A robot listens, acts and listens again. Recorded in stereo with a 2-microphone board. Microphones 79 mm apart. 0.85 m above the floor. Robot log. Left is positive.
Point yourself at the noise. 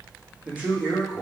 cmd yaw -30
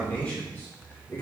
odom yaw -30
note: So it is at 30° left.
cmd yaw +30
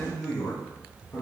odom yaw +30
note: The man speaking is now 30° left.
cmd yaw +30
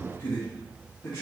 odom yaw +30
note: The man speaking is now 40° left.
cmd yaw +40
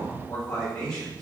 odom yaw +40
note: The man speaking is now 20° left.
cmd yaw +20
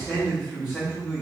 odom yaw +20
end: Facing the man speaking.